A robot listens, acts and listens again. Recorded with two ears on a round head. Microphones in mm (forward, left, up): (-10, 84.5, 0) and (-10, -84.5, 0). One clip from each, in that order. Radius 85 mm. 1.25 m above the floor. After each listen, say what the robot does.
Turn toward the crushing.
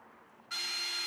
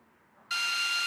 Keep listening.
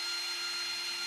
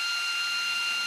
Keep listening.
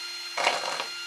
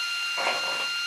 Turn 90° left.
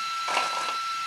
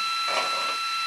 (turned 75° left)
Turn 15° left.
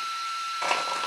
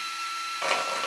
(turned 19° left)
Facing the crushing.